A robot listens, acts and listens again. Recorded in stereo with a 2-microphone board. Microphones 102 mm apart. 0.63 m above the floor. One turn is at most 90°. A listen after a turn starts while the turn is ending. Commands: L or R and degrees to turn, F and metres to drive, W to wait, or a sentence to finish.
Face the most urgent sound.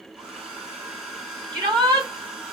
R35
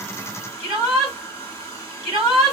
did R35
Facing the shout.